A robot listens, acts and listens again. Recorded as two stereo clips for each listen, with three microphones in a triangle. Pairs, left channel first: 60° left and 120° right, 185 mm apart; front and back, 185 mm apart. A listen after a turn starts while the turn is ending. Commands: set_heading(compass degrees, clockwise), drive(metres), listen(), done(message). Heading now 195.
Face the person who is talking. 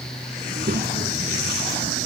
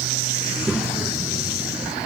set_heading(285)
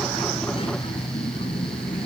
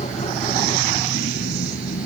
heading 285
done("Found it: a child speaking, straight ahead.")